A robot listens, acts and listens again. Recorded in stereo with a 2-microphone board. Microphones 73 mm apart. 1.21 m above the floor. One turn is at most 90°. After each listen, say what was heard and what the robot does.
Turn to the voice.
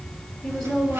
Turn 30° left.
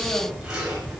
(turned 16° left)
Keep listening.
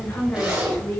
The woman speaking: about 25° left or 155° left. Turn 25° left.
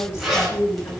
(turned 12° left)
So it is at 140° left. Turn 90° left.
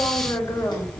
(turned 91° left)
The woman speaking is now 45° left. Turn 45° left.
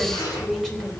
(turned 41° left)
Keep listening.
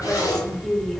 Facing the woman speaking, 2 to 4 m away.